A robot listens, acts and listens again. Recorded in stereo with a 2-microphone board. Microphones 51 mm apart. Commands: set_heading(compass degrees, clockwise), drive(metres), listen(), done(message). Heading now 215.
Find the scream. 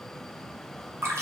listen()
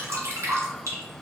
listen()
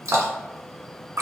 done("I can't make out a scream, only dripping.")